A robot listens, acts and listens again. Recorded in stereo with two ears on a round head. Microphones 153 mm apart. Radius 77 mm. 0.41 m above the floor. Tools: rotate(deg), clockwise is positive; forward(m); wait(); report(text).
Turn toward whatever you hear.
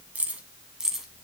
rotate(30)
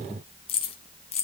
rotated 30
rotate(-40)
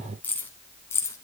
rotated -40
rotate(-15)
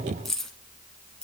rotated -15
report("Facing the keys jangling.")